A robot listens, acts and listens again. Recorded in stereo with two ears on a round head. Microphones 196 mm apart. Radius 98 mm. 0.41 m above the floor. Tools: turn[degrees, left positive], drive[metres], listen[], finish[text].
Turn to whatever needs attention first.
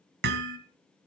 Action: listen[]
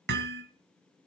Action: listen[]
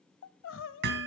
Thought: The crying: about 55° left or 125° left.
Action: turn[55]
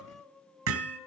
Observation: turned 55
Action: finish[Facing the crying.]